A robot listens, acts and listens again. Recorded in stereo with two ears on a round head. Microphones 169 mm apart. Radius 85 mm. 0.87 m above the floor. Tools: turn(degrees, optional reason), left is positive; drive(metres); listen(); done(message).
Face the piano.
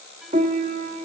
turn(degrees=-40, reason="The piano: about 40° right or 140° right.")
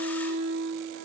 turn(degrees=-100, reason="So it is at 100° right.")
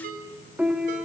turn(degrees=-10, reason="The piano is now 10° right.")
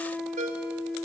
done("Found it: a piano, straight ahead, 1 to 2 m away.")